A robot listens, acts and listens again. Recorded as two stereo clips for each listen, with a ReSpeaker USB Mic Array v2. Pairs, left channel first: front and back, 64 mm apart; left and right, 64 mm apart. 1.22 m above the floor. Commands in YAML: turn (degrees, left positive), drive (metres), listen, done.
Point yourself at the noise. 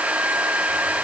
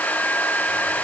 listen: true
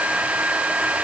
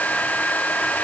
listen: true
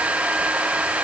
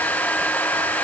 done: "I can't make out anything to turn to."